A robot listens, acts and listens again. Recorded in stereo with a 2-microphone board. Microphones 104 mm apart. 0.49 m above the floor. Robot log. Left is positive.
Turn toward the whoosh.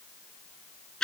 cmd idle
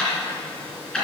cmd idle
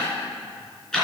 end: I can't make out a whoosh, only ticking.